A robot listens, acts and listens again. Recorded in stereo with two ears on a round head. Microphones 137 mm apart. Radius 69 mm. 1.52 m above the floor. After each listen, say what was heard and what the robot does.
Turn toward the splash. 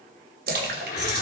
The splash: about 60° right or 120° right. Turn 60° right.
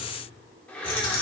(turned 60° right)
Keep listening.
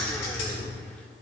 I heard a splash, but can't make it out now. It was about straight ahead or 60° right.